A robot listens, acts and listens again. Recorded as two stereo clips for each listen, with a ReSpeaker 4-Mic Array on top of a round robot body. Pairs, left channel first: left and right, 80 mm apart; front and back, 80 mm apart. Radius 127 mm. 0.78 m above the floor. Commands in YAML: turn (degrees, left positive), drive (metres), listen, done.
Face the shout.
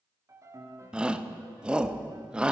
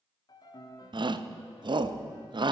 turn: -170
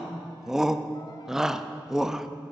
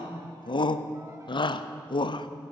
done: "Facing the shout."